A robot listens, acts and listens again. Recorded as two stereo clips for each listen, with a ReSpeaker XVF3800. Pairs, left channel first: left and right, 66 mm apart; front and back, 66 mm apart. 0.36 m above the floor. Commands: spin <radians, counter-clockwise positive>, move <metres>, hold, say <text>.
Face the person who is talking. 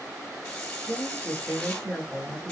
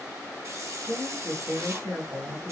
spin -2.62
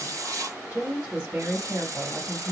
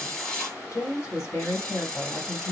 spin -0.44
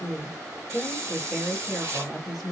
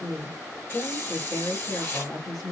say Found it: a woman speaking, straight ahead, 2 to 4 m away.